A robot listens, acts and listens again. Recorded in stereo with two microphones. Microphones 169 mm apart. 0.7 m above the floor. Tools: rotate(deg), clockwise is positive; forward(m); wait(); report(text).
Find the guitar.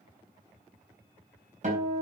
rotate(50)
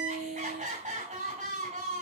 rotate(85)
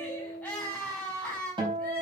rotate(30)
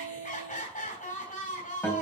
rotate(-10)
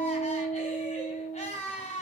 report("Facing the guitar.")